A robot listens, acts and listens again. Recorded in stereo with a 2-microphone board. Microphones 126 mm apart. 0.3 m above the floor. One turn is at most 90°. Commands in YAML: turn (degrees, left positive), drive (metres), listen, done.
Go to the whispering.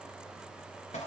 listen: true
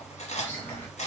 turn: 15
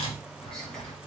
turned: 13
drive: 1.0
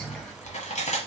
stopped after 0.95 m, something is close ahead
listen: true
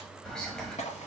done: "I am next to the whispering."